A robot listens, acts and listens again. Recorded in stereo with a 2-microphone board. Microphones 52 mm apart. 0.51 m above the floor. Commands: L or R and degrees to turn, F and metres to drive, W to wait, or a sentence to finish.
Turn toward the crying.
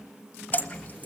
W
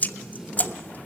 W
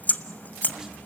I can't make out crying, only tape being pulled and dripping.